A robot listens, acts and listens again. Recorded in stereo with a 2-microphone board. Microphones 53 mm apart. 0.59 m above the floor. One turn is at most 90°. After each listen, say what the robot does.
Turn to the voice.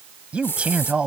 Turn 20° right.
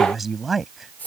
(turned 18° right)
Found it: a man speaking, straight ahead.